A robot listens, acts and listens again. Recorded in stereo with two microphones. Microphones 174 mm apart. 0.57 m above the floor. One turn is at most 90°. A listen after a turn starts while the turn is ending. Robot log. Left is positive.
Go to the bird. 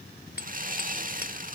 cmd idle
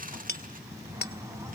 note: The bird: about 15° right or 165° right.
cmd yaw -15
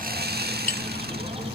note: So it is at 150° right.
cmd yaw -90
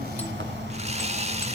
note: The bird is now 80° right.
cmd yaw -80
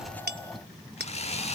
cmd idle
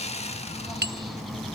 cmd fwd 1.0
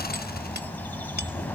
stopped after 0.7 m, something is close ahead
note: The bird is now 10° left.
cmd yaw +10
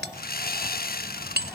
cmd idle
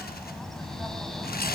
end: Blocked. The bird is further on, straight ahead.